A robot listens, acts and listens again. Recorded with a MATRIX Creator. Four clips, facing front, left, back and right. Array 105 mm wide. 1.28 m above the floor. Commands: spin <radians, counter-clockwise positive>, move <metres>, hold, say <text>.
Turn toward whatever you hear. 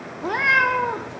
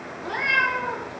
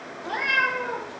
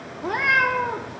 spin -0.44
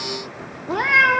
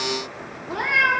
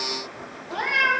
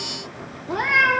spin -0.17
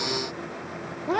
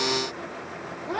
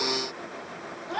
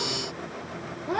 say Found it: a cat meowing, straight ahead, 1 to 2 m away.